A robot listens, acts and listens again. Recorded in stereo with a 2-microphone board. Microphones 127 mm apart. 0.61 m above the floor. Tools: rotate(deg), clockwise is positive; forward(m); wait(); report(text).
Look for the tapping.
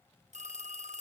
wait()
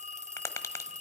rotate(-25)
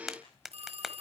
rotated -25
report("Found it: tapping, straight ahead.")